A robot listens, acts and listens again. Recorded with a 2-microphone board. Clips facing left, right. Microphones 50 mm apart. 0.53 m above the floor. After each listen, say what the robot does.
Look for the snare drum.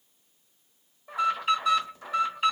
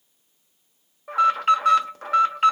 Keep listening.
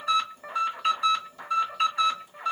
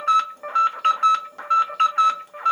Keep listening.
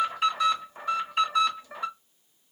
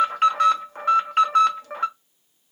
I can't make out a snare drum to turn to.